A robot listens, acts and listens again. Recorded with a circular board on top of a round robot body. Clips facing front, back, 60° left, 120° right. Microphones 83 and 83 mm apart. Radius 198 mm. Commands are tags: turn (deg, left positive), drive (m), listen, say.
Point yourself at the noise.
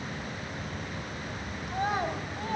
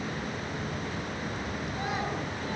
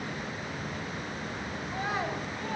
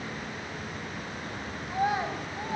<turn deg="-45"/>
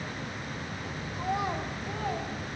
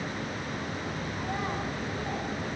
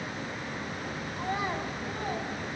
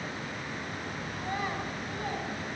<listen/>
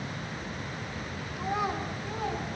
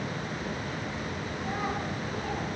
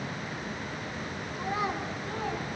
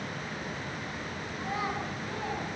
<turn deg="-10"/>
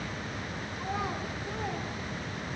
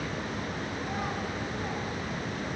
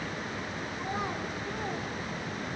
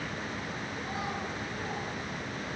<listen/>
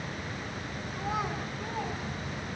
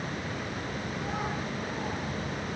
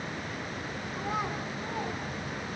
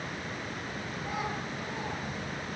<listen/>
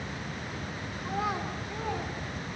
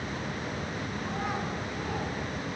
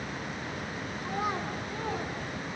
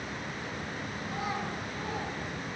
<say>Facing where the child speaking came from. I can't hear it now.</say>